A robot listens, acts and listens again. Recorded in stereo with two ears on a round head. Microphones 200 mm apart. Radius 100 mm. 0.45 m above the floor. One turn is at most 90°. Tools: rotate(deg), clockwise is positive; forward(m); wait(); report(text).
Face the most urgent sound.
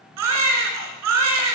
rotate(90)
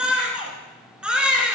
report("Found it: a baby crying, straight ahead, 1 to 2 m away.")